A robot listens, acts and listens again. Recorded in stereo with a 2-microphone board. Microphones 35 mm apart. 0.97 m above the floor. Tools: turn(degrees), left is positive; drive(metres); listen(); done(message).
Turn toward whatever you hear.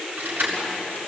turn(degrees=-70)
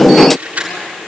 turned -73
turn(degrees=-35)
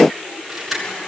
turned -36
done("Facing the keys jangling.")